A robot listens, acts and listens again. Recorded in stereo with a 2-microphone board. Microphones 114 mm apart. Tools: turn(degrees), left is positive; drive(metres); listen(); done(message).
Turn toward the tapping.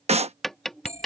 turn(degrees=30)
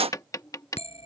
turn(degrees=145)
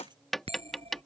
done("Facing the tapping.")